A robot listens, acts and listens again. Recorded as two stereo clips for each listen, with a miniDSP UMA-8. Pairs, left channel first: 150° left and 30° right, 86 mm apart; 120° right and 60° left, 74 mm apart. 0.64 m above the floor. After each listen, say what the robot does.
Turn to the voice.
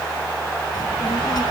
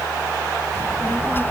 Turn 180° left.
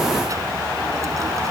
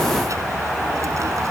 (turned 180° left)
Keep listening.
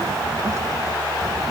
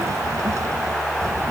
Turn 20° left.
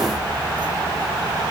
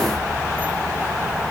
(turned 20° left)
Found it: a child speaking, straight ahead.